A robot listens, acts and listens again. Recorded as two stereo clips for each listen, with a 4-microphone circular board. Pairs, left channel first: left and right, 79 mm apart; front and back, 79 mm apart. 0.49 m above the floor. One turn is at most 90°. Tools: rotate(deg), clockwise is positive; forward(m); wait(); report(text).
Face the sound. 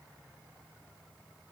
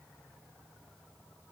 wait()
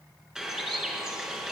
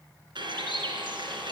rotate(90)
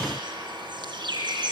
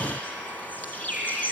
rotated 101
rotate(70)
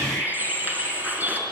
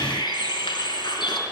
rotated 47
rotate(20)
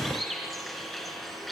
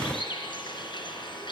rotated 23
report("Found it: a bird, straight ahead, over 4 m away.")